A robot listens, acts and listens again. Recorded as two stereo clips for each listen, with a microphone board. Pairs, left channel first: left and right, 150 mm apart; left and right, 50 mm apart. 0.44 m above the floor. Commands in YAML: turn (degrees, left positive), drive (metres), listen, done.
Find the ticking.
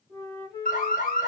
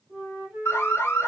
listen: true
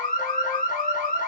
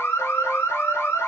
listen: true
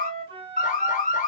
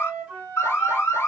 done: "I can't make out ticking, only an alarm and a flute."